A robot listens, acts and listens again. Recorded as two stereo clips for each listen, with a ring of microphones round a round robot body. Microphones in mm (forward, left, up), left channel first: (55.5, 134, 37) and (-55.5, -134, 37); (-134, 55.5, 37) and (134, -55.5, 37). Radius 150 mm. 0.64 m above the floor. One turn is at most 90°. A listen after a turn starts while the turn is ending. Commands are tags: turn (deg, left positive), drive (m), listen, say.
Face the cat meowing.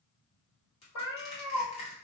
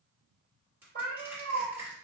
<turn deg="45"/>
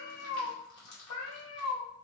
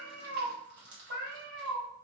<turn deg="35"/>
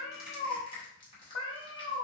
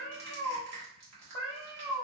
<turn deg="30"/>
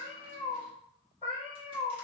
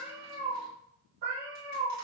<say>Facing the cat meowing, 1 to 2 m away.</say>